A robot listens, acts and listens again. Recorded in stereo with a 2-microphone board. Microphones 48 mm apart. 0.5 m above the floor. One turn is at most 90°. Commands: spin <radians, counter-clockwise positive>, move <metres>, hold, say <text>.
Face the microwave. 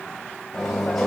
spin 0.52
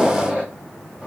spin -0.44
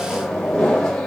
spin 0.17
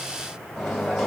say Found it: a microwave, straight ahead.